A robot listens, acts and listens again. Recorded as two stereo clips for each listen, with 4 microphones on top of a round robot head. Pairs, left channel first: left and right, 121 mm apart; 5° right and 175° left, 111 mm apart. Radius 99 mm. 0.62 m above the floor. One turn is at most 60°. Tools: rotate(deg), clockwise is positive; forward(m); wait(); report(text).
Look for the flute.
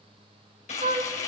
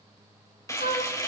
rotate(40)
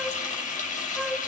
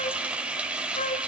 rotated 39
report("Found it: a flute, straight ahead, 1 to 2 m away.")